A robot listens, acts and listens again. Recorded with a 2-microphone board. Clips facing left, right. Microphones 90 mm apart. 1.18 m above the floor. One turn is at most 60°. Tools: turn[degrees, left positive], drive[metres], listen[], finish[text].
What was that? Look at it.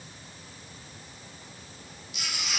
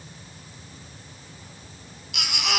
Action: turn[-60]
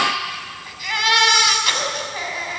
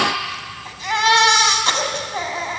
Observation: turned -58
Thought: So it is at 30° right.
Action: turn[-30]
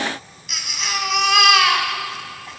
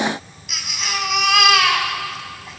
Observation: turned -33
Action: finish[Found it: a baby crying, straight ahead.]